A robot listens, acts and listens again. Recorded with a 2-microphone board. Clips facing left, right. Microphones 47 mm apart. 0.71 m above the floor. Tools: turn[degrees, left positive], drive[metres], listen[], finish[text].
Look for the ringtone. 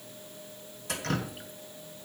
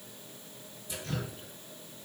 Action: listen[]
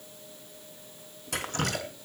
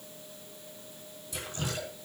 Action: listen[]
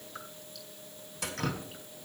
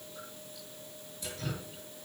Action: finish[I can't make out a ringtone, only dripping.]